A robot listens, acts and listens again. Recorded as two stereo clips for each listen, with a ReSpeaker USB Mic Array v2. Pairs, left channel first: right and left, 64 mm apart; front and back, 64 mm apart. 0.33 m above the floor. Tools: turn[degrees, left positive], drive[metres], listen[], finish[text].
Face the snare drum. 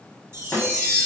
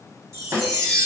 Thought: The snare drum: 145° right.
Action: turn[-145]
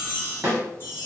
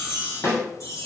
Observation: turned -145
Thought: The snare drum is now 35° left.
Action: turn[35]
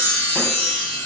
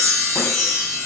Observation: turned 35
Action: listen[]
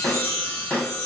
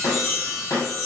Thought: The snare drum is now 15° right.
Action: turn[-15]
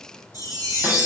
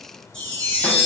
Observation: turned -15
Action: listen[]
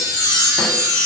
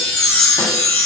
Action: listen[]
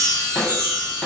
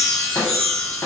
Action: finish[Facing the snare drum.]